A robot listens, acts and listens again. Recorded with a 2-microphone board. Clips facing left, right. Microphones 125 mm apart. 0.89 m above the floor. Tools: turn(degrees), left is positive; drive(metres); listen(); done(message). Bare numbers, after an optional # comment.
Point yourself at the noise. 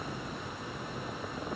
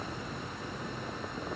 listen()
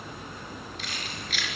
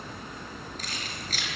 # The keys jangling: about 40° right or 140° right.
turn(-40)
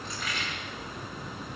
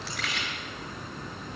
# So it is at 100° right.
turn(-100)
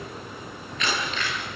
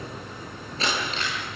# The keys jangling is now 35° right.
turn(-35)
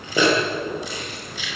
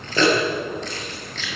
# The keys jangling is now 10° left.
turn(10)
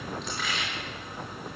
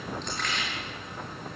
done("Found it: keys jangling, straight ahead, over 4 m away.")